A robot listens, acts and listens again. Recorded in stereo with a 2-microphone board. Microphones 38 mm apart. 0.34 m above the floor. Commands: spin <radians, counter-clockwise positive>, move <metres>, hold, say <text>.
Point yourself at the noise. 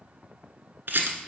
spin -1.57
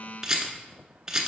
spin -0.26
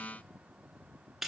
say Facing the rattle.